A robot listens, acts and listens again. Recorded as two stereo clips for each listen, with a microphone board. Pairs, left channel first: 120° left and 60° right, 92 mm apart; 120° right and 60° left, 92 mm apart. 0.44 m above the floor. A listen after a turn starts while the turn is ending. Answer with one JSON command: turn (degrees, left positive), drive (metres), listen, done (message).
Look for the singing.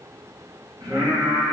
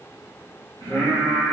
{"turn": -100}
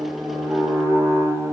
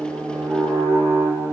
{"turn": -45}
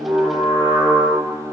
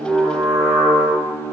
{"turn": -40}
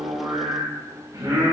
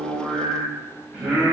{"turn": -25}
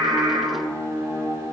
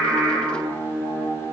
{"done": "Found it: singing, straight ahead, 1 to 2 m away."}